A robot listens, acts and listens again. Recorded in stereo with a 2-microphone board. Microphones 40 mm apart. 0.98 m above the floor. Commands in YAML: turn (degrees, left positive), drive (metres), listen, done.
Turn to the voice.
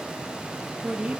turn: -30
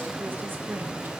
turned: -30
turn: -120
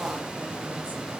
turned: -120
listen: true
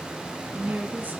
turn: -50
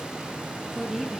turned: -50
done: "Facing the woman speaking."